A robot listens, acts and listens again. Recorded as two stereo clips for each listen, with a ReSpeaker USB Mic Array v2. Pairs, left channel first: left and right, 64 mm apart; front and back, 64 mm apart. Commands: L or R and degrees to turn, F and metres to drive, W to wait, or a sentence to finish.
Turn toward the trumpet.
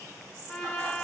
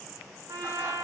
L170
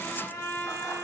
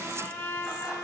L50
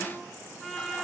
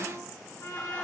Found it: a trumpet, straight ahead, 2 to 4 m away.